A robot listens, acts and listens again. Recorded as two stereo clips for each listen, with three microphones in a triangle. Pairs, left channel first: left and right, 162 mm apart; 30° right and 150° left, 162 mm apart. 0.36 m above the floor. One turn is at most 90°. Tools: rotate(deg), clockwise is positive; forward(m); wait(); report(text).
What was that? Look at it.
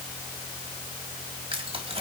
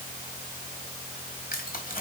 rotate(45)
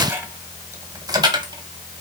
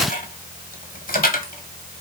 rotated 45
rotate(30)
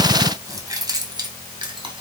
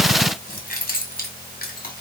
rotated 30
rotate(30)
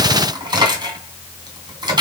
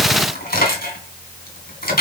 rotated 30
rotate(30)
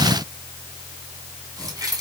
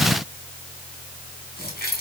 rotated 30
rotate(25)
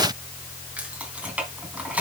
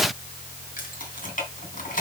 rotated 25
rotate(10)
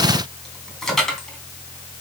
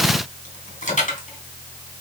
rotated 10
report("Facing the keys jangling.")